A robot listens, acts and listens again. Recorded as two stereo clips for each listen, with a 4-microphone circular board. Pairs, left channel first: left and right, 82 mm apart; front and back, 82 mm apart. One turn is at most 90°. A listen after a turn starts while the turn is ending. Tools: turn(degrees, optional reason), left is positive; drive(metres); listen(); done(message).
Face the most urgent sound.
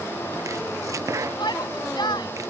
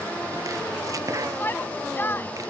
turn(degrees=65, reason="The shout: 65° left.")
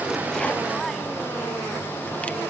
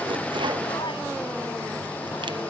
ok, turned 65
listen()
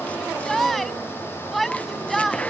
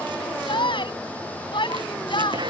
done("Facing the shout.")